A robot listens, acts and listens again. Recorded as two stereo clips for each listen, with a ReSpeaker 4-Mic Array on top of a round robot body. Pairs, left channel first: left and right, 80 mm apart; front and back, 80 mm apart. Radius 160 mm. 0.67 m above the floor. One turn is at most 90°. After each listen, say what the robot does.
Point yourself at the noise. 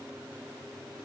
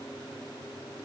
Keep listening.
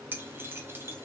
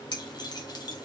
Turn 30° right.
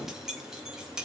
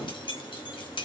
Turn 10° right.
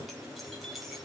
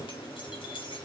Found it: keys jangling, straight ahead.